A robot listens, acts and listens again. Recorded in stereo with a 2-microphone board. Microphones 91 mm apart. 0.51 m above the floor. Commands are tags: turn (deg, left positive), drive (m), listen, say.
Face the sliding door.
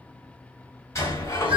<turn deg="35"/>
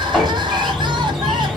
<say>Facing the sliding door.</say>